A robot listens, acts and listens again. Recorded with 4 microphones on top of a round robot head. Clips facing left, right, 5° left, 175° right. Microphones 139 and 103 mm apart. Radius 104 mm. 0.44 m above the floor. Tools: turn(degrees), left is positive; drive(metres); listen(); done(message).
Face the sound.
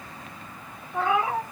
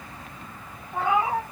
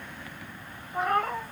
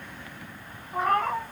turn(degrees=-125)
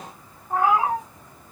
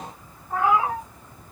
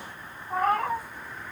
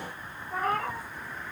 turn(degrees=35)
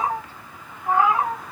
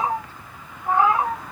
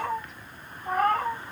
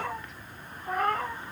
turn(degrees=10)
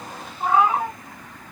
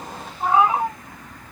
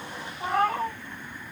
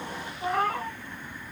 done("Found it: a cat meowing, straight ahead, 2 to 4 m away.")